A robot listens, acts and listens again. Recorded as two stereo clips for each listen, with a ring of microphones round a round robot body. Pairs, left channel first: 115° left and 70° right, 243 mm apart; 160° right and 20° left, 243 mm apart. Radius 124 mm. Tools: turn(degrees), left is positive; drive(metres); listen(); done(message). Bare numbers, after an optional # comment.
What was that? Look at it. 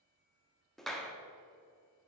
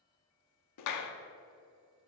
# The clap: 160° right.
turn(-160)
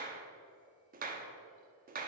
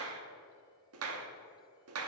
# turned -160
# The clap is now 10° right.
turn(-10)
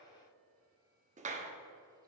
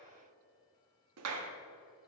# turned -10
done("Facing the clap.")